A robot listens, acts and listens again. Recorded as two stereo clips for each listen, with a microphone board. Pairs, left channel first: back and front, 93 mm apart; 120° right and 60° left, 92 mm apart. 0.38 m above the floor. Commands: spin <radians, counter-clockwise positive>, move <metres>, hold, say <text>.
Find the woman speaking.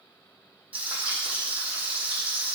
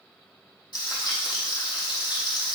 hold
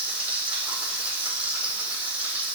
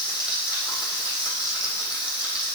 hold
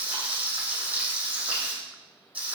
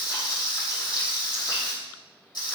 say I can't make out a woman speaking to turn to.